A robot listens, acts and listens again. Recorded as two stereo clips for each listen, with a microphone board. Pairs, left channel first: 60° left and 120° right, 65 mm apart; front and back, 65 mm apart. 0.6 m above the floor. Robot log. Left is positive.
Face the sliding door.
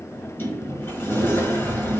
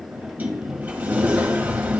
note: The sliding door: 115° left.
cmd yaw +115
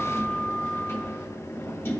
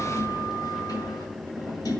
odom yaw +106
note: The sliding door is now 10° left.
cmd yaw +10
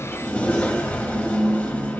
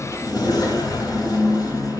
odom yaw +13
end: Facing the sliding door, 1 to 2 m away.